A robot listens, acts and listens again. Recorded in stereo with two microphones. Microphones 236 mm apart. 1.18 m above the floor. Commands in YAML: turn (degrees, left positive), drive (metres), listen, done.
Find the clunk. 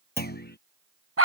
turn: 40
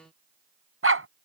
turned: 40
listen: true
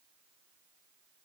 done: "I heard a clunk, but can't make it out now. It was about straight ahead or 100° left."